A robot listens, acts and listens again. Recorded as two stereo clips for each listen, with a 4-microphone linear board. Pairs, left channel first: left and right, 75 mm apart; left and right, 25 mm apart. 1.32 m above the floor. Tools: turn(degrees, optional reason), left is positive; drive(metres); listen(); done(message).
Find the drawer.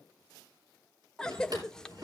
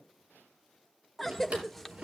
turn(degrees=-60, reason="The drawer: about 60° right or 120° right.")
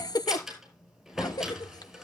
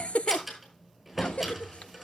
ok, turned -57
done("Facing the drawer, over 4 m away.")